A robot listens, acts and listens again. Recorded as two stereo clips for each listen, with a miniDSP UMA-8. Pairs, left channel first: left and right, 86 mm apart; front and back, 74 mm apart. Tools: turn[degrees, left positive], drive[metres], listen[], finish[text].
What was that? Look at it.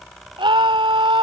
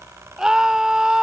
Thought: The scream: 100° right.
Action: turn[-100]
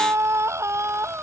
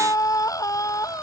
Thought: The scream is now 35° right.
Action: turn[-35]
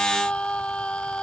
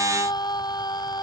Thought: The scream is now 10° left.
Action: turn[10]
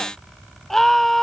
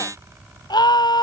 Action: finish[Facing the scream.]